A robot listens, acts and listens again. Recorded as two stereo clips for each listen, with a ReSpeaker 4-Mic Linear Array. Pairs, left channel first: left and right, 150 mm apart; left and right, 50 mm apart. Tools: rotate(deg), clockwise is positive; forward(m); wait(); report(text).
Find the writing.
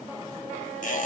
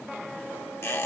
wait()
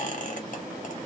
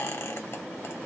wait()
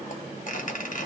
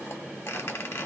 report("I can't make out writing to turn to.")